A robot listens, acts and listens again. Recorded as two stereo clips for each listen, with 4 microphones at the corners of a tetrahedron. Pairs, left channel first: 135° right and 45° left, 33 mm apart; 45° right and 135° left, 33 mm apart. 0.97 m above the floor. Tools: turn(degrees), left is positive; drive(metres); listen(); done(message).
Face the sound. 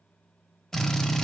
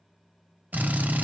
turn(degrees=155)
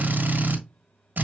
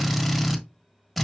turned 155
turn(degrees=40)
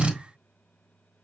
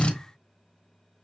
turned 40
done("Facing the drill.")